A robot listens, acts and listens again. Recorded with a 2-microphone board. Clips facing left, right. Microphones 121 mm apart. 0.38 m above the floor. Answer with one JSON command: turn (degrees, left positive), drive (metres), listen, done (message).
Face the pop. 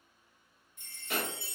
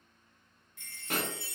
{"turn": -50}
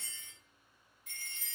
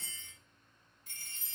{"listen": true}
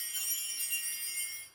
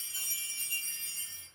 {"done": "I heard a pop, but can't make it out now. It was about straight ahead or 80° right."}